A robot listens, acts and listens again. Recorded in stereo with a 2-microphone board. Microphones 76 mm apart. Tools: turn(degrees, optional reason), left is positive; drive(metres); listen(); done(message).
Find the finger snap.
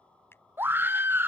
turn(degrees=30, reason="The finger snap: about 30° left or 150° left.")
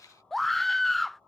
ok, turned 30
listen()
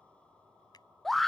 listen()
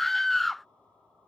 done("I heard a finger snap, but can't make it out now. It was about straight ahead or 120° left.")